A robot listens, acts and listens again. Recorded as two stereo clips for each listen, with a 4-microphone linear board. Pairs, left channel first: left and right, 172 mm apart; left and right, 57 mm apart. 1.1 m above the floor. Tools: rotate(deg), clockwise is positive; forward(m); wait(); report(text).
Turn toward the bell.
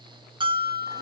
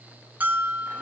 rotate(30)
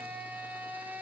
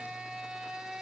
wait()
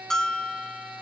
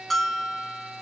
report("Facing the bell, 2 to 4 m away.")